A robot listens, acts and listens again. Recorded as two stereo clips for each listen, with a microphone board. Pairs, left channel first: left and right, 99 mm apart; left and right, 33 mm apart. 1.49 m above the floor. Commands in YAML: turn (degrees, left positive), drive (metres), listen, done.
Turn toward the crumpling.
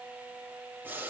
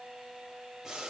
listen: true
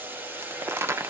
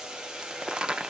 turn: -25
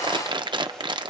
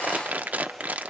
turn: -130
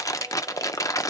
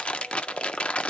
turn: 35
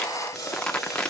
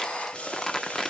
turn: 10
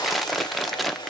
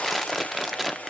done: "Facing the crumpling."